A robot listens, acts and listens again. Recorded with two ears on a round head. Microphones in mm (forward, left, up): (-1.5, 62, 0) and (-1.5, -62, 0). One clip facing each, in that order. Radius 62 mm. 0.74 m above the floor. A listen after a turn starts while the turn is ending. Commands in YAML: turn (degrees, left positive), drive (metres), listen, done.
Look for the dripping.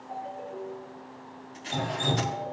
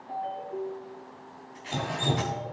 turn: -30
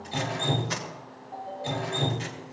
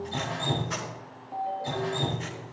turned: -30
turn: 25
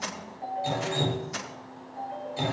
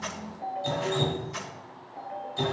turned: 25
turn: 10
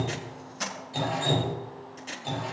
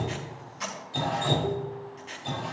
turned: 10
done: "Found it: dripping, straight ahead, 2 to 4 m away."